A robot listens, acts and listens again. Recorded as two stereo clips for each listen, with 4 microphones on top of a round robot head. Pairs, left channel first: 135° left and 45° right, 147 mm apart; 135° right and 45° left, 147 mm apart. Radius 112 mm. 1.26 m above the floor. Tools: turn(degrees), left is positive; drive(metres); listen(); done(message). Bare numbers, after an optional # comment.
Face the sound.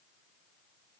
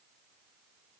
listen()
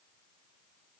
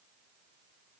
listen()
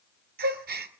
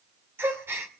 # The gasp: 30° right.
turn(-30)
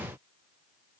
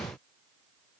done("Facing where the gasp came from. I can't hear it now.")